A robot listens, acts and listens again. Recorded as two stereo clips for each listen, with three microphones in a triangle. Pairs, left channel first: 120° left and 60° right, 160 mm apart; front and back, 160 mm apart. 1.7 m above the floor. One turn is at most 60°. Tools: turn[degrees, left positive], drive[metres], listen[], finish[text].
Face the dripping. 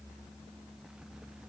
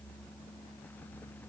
Action: listen[]
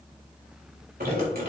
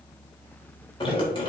Thought: The dripping: 55° right.
Action: turn[-55]
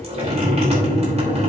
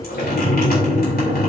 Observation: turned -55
Thought: The dripping is now 15° right.
Action: turn[-15]
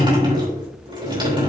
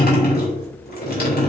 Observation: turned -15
Action: finish[Found it: dripping, straight ahead.]